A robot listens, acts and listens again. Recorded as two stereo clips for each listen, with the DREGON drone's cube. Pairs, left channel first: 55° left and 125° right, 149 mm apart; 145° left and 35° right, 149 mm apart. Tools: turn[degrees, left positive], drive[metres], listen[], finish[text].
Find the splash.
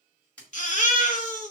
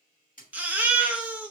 Thought: The splash: 140° left.
Action: turn[140]
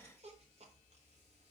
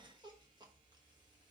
Action: finish[I heard a splash from this way, but can't make it out now.]